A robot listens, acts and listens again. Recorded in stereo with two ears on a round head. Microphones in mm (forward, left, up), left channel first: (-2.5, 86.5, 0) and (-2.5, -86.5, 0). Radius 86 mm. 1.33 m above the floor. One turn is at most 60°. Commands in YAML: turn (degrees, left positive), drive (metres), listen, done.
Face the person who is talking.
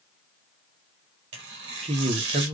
turn: -30
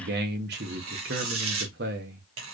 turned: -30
turn: -60
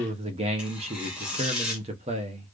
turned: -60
turn: -35
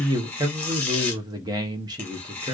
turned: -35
turn: -25
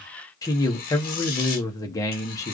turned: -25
turn: 20
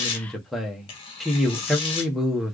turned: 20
done: "Found it: a man speaking, straight ahead."